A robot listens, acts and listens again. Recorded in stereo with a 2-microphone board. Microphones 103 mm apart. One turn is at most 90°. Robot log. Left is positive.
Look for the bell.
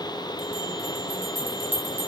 note: The bell: about 20° right or 160° right.
cmd yaw -20
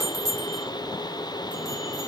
note: So it is at 140° right.
cmd yaw -90
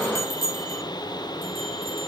note: The bell is now 65° right.
cmd yaw -65
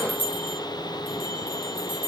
note: The bell is now 20° left.
cmd yaw +20
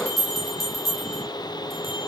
end: Facing the bell.